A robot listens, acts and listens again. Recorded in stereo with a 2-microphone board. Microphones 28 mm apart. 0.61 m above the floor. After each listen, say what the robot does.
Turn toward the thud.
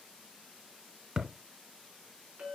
Turn 25° right.
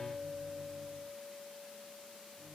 Keep listening.
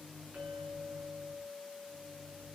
I heard a thud, but can't make it out now. It was about straight ahead or 130° right.